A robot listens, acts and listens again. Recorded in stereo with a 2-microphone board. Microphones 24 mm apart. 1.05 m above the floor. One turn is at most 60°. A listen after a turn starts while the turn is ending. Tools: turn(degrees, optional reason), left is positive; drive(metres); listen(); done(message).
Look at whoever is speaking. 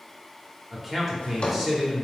turn(degrees=-30)
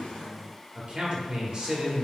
turn(degrees=-60, reason="So it is at 135° right.")
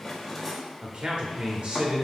turn(degrees=-55, reason="The man speaking is now 55° right.")
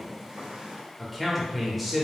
done("Facing the man speaking, 1 to 2 m away.")